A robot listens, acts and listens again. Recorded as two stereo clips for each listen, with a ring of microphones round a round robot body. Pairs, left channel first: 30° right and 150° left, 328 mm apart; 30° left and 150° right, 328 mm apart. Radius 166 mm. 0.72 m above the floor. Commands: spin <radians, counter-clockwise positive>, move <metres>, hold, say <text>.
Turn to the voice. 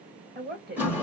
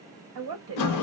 spin -2.53
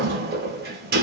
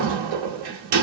hold
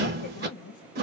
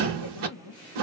say Facing the woman speaking, 1 to 2 m away.